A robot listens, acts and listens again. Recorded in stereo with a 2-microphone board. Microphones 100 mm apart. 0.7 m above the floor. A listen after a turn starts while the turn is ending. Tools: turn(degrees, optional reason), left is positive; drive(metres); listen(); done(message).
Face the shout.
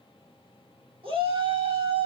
turn(degrees=-65, reason="The shout: about 65° right or 115° right.")
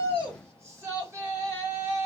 turn(degrees=-35, reason="So it is at 35° right.")
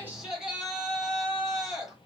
done("Found it: a shout, straight ahead, 2 to 4 m away.")